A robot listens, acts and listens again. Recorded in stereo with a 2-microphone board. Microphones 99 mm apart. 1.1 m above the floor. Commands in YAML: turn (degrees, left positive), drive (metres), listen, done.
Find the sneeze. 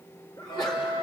turn: 45
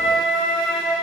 listen: true
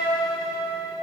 done: "I heard a sneeze, but can't make it out now. It was about straight ahead or 90° left."